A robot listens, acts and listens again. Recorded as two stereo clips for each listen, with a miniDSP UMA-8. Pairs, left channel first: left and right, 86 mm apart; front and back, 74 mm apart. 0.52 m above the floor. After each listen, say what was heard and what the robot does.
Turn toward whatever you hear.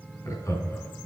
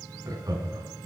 The laughter: 145° left. Turn 145° left.
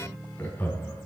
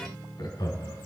The laughter is now 25° left. Turn 25° left.
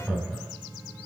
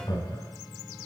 Facing the laughter.